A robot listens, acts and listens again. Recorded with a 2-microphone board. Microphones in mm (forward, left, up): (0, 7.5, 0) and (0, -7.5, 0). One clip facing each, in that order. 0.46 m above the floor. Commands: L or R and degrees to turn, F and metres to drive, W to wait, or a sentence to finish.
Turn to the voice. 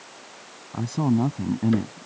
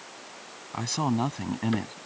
R55
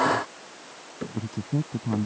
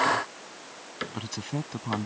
R65
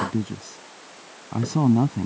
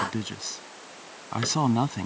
R30
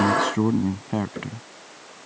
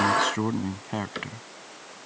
Found it: a man speaking, straight ahead.